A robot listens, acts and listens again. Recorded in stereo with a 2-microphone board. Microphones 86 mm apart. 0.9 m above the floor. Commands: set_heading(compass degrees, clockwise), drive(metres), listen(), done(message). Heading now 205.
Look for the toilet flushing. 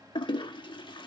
set_heading(140)
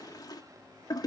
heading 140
set_heading(95)
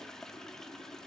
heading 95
done("Found it: a toilet flushing, straight ahead.")